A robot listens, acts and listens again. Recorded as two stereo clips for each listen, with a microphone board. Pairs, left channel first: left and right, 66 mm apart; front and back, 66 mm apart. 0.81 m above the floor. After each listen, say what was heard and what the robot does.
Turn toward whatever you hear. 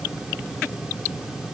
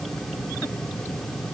Keep listening.
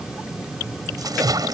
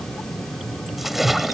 The splash: 95° right. Turn 95° right.
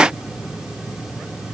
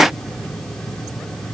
Facing where the splash came from. I can't hear it now.